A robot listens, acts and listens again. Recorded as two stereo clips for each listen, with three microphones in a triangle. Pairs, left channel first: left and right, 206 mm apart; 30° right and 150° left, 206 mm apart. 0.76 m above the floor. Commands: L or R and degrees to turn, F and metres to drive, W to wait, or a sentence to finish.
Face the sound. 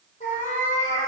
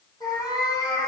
L40
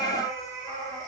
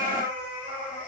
L15
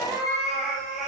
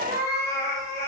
Facing the cat meowing, 2 to 4 m away.